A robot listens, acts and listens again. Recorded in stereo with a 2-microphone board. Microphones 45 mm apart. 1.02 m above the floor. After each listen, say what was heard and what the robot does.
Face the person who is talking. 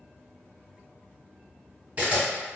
Keep listening.
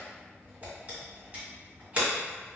Keep listening.
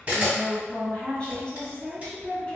The woman speaking: about 25° left or 155° left. Turn 25° left.
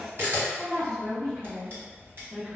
Found it: a woman speaking, straight ahead.